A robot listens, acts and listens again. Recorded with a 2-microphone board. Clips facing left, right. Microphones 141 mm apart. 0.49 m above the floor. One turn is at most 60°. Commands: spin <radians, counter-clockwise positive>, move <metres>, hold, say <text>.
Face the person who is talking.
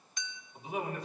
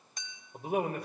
spin -0.96
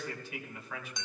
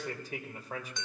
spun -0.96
spin -0.79
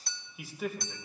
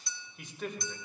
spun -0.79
say Facing the man speaking, 1 to 2 m away.